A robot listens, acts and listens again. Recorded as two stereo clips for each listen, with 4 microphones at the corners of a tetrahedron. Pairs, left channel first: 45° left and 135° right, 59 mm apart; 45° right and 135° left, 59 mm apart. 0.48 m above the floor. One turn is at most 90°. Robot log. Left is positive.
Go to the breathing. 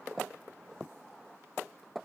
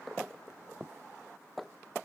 cmd idle
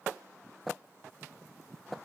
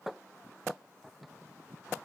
cmd idle
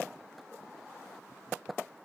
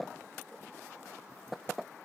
end: I can't make out breathing.